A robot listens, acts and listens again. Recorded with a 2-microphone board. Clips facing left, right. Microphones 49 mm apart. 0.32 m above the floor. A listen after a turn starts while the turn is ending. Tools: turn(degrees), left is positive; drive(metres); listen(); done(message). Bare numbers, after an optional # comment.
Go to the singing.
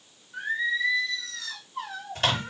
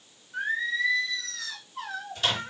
turn(30)
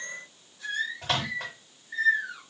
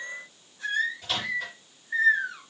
# So it is at 30° right.
turn(-30)
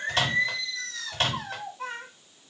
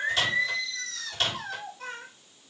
# The singing is now 15° left.
turn(15)
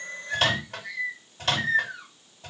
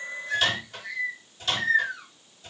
drive(1.0)
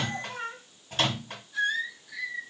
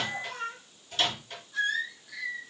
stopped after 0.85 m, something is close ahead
done("I am next to the singing.")